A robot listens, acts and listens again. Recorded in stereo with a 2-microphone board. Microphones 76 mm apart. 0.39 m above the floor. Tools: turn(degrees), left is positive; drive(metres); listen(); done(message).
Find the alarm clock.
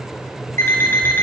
turn(degrees=30)
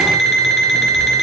done("Facing the alarm clock, 2 to 4 m away.")